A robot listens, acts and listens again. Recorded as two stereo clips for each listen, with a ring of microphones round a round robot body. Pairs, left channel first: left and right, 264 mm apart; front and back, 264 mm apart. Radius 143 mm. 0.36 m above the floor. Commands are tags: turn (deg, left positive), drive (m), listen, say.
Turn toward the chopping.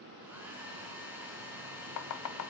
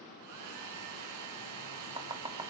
<turn deg="105"/>
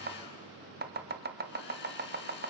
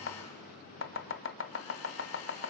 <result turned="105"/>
<turn deg="-40"/>
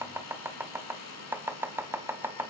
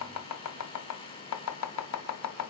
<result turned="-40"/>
<turn deg="-10"/>
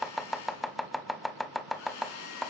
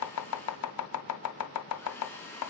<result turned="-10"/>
<say>Facing the chopping, 1 to 2 m away.</say>